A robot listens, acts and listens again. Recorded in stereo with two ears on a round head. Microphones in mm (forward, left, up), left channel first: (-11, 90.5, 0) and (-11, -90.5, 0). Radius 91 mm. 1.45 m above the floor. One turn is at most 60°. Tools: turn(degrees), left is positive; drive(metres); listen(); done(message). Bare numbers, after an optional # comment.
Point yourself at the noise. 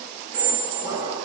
# The squeak: about 40° right or 140° right.
turn(-40)
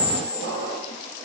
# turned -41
# So it is at 95° right.
turn(-60)
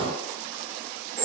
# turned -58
# The squeak is now 35° right.
turn(-35)
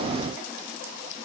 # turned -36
listen()
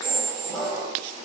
done("Found it: a squeak, straight ahead, 1 to 2 m away.")